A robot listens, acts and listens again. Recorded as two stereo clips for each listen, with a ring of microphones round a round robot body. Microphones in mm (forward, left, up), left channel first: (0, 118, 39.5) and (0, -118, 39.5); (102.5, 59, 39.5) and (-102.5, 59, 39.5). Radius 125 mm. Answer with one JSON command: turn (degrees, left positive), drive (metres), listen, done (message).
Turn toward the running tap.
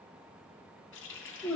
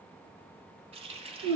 {"turn": 120}
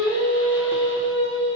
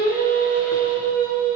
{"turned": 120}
{"listen": true}
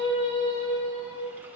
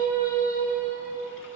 {"listen": true}
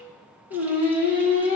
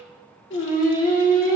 {"done": "I heard a running tap from this way, but can't make it out now."}